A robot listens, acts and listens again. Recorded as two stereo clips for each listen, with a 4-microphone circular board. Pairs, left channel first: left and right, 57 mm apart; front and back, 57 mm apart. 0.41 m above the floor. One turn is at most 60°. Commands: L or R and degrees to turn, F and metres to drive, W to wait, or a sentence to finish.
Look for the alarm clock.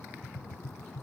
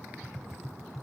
W
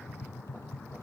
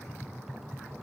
W
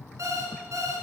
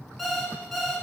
R60
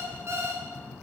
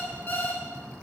R60
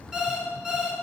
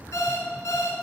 R15
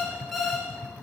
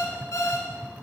Facing the alarm clock.